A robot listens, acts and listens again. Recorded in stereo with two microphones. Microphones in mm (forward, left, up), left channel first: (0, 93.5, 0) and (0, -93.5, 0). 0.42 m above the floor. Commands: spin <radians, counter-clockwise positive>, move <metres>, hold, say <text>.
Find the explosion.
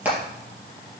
hold
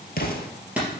spin 1.05
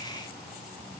hold
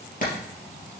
say I heard an explosion, but can't make it out now. It was about straight ahead or 60° left.